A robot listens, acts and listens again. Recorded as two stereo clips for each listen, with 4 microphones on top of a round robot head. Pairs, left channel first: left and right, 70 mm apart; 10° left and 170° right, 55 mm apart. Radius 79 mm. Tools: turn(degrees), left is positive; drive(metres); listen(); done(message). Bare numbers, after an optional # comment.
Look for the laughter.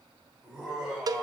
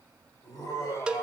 # The laughter: 15° right.
turn(-15)
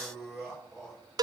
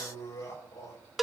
done("Found it: laughter, straight ahead.")